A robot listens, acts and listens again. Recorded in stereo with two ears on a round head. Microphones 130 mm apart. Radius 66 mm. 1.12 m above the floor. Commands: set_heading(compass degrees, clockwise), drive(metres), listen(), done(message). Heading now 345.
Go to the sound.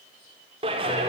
set_heading(25)
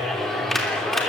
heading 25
drive(1.0)
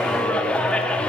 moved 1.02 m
drive(1.0)
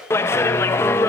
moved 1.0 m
set_heading(10)
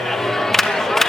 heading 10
drive(1.0)
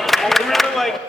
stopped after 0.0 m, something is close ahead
done("Arrived at the clap, straight ahead.")